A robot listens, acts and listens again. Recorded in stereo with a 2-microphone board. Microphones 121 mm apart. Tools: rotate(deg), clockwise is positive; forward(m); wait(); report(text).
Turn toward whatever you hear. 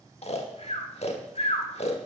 rotate(-60)
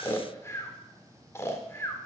rotate(-25)
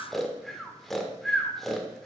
report("Facing the snoring.")